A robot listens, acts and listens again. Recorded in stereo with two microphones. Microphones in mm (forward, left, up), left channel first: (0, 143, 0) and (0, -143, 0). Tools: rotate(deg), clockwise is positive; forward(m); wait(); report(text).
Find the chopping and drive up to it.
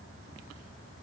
wait()
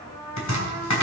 rotate(-75)
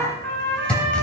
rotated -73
forward(1.0)
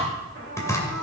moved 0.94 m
rotate(-10)
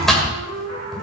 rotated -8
forward(1.0)
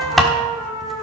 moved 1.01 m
forward(1.0)
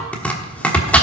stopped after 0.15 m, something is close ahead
report("I am next to the chopping.")